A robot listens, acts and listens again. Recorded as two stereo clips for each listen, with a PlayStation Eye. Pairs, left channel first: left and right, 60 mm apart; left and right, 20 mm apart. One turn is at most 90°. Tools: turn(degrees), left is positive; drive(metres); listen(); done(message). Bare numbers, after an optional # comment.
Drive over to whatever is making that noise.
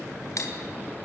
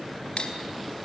# The cutlery clinking: about 60° left or 120° left.
turn(60)
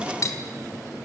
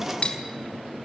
# So it is at 60° left.
turn(60)
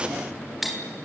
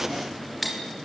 drive(1.0)
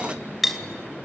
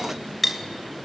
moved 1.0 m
drive(1.0)
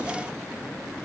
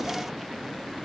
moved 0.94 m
listen()
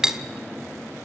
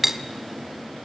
# The cutlery clinking is now 10° right.
turn(-10)
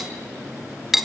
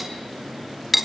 drive(1.0)
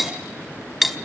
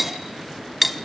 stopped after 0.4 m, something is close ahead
done("Arrived at the cutlery clinking, straight ahead.")